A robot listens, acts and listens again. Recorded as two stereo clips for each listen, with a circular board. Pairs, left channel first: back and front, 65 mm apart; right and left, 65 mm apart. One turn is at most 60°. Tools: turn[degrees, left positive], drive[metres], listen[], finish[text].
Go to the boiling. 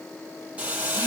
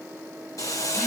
Thought: The boiling: 70° right.
Action: turn[-60]
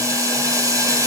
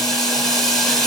Thought: The boiling is now 10° right.
Action: turn[-10]
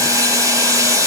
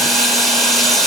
Action: drive[1.0]
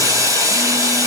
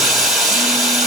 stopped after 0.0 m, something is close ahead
Action: finish[Something is in my way. I am facing the boiling but have not reached it.]